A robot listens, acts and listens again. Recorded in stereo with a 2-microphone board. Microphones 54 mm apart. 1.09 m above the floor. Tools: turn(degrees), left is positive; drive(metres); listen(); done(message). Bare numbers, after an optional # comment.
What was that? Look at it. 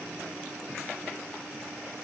listen()
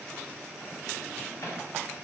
# The microwave: about 70° left or 110° left.
turn(70)
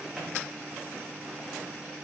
listen()
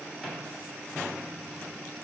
listen()
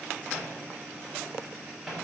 done("Found it: a microwave, straight ahead.")